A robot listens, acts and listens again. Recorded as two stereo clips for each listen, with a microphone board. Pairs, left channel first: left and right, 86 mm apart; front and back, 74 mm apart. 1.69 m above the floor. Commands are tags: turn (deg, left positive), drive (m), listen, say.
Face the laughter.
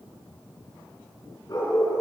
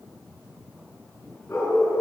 <listen/>
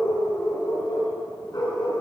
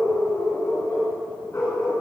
<listen/>
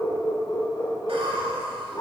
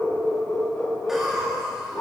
<turn deg="-95"/>
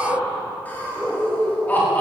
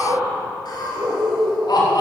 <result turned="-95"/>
<turn deg="20"/>
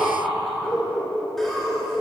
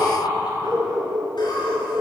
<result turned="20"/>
<say>Found it: laughter, straight ahead.</say>